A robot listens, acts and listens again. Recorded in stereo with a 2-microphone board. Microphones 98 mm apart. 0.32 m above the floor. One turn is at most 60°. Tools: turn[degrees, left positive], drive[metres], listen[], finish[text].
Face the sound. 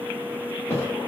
Thought: The thud: about 25° left or 155° left.
Action: turn[25]
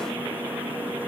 Action: listen[]
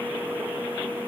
Action: finish[I heard a thud, but can't make it out now. It was about straight ahead or 130° left.]